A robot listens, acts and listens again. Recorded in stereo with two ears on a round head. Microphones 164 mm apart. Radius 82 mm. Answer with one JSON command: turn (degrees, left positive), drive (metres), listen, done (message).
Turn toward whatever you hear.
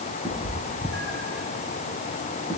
{"turn": 15}
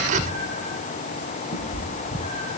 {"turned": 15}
{"turn": 150}
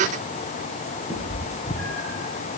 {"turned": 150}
{"turn": 10}
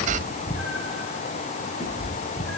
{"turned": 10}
{"done": "Facing the cat meowing, over 4 m away."}